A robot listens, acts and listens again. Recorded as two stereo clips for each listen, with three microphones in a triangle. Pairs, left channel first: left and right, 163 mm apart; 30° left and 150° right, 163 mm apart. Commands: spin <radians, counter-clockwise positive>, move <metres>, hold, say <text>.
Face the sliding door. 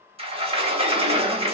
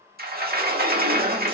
spin -2.53
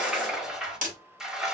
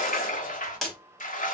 say Facing the sliding door.